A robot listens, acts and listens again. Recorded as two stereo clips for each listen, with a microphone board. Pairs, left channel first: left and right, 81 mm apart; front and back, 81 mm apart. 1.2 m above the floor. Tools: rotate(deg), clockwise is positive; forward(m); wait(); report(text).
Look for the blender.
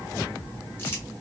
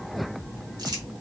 wait()
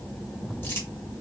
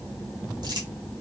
wait()
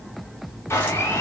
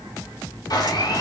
rotate(-30)
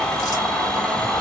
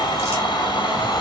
report("Found it: a blender, straight ahead, 1 to 2 m away.")